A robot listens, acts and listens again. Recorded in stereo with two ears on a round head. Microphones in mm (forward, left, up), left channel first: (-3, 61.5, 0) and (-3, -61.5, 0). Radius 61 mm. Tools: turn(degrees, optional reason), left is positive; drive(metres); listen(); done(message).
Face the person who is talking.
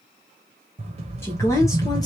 turn(degrees=25, reason="The woman speaking: about 25° left or 155° left.")
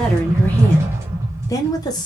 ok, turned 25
turn(degrees=30, reason="The woman speaking: about 30° left or 150° left.")
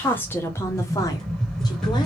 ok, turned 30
turn(degrees=25, reason="The woman speaking: about 25° left or 155° left.")
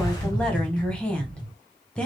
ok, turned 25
turn(degrees=10, reason="So it is at 10° left.")
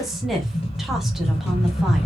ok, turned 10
done("Found it: a woman speaking, straight ahead, 1 to 2 m away.")